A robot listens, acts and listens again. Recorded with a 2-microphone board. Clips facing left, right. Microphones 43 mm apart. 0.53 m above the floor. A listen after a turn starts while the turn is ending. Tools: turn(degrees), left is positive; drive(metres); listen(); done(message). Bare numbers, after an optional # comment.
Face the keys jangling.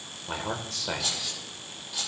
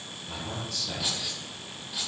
# The keys jangling: about 15° right or 165° right.
turn(-15)
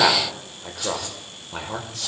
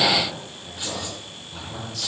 listen()
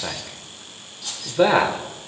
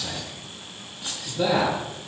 # The keys jangling: about 40° right or 140° right.
turn(-40)
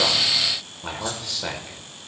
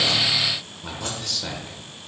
listen()
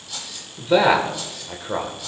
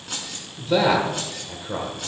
# So it is at 95° right.
turn(-95)
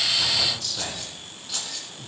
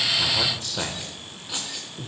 # The keys jangling is now 20° right.
turn(-20)
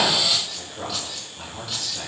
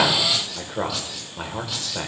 listen()
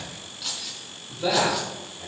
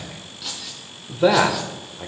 done("Found it: keys jangling, straight ahead, 2 to 4 m away.")